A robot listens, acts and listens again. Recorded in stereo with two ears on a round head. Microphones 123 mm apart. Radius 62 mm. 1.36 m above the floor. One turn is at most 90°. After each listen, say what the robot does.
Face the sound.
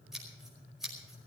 Turn 30° right.
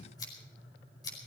Turn 30° left.
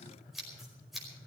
Found it: scissors, straight ahead, over 4 m away.